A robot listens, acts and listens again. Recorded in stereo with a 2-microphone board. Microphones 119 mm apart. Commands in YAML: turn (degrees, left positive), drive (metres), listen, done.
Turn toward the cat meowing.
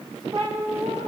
turn: -55
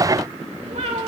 turn: -75
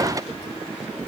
listen: true
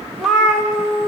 done: "Facing the cat meowing, 2 to 4 m away."